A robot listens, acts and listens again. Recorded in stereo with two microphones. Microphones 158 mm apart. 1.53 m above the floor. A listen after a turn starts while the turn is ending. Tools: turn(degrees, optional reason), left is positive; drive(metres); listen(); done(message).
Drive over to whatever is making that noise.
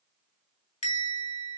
turn(degrees=50, reason="The bell: about 50° left or 130° left.")
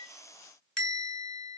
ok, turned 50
drive(metres=1.0)
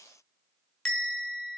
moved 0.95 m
drive(metres=1.0)
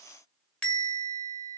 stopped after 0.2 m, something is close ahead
turn(degrees=10, reason="The bell is now 10° left.")
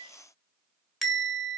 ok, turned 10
done("I am next to the bell.")